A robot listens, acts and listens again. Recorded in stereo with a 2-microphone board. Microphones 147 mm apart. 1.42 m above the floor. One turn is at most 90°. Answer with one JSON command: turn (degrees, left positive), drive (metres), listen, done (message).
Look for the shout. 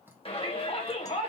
{"turn": 40}
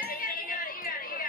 {"turn": 90}
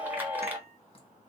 {"turn": -15}
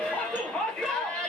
{"done": "Facing the shout."}